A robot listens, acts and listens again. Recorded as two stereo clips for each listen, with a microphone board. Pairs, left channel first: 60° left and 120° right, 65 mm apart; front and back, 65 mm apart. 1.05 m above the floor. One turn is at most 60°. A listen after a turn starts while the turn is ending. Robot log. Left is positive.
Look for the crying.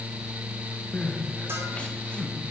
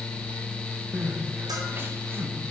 note: The crying: 130° left.
cmd yaw +60
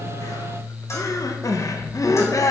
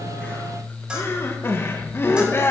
note: The crying is now 45° left.
cmd yaw +45
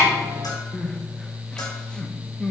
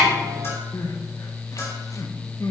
note: The crying is now 15° right.
cmd yaw -15
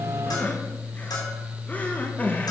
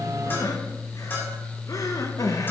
end: Found it: crying, straight ahead.